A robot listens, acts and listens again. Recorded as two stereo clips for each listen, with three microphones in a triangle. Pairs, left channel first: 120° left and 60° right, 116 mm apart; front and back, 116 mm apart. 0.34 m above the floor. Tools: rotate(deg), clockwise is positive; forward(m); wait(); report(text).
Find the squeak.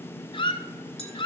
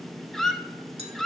rotate(-85)
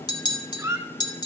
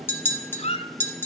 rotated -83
report("Found it: a squeak, straight ahead.")